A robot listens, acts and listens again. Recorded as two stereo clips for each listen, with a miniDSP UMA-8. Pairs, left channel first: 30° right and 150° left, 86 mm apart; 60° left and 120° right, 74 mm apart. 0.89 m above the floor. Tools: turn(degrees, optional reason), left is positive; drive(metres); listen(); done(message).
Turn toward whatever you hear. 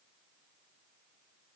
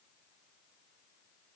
listen()
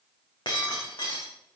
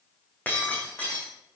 done("Facing the breaking glass, over 4 m away.")